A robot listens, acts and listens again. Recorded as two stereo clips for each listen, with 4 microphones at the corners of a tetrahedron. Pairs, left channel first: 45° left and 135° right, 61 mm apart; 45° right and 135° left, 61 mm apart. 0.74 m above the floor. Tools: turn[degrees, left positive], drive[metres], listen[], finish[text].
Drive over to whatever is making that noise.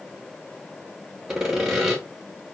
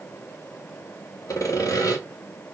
Thought: The sawing: 55° right.
Action: turn[-55]
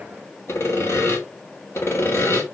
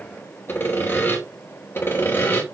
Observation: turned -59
Action: drive[1.0]
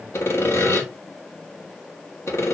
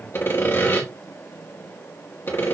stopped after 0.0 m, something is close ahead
Action: finish[Blocked. The sawing is further on, straight ahead.]